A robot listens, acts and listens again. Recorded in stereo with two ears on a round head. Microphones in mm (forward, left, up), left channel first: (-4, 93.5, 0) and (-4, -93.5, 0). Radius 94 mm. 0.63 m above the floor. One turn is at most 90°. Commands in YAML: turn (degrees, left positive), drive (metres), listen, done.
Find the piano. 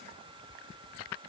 listen: true
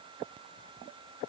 listen: true
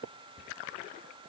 done: "I can't make out a piano."